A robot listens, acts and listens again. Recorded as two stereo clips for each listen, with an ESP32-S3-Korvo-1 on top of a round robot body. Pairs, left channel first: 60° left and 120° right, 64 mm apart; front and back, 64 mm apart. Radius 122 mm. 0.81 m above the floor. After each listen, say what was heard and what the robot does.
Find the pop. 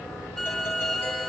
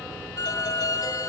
Keep listening.
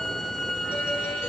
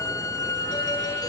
Keep listening.
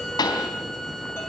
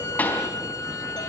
The pop: 65° left. Turn 65° left.
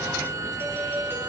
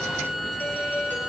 I heard a pop from this way, but can't make it out now.